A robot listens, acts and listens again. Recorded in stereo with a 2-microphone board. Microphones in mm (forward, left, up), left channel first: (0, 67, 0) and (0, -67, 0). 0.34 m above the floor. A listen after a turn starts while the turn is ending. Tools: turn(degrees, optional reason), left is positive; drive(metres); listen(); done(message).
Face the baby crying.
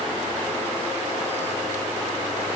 listen()
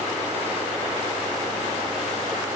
listen()
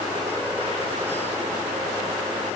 done("I can't make out a baby crying.")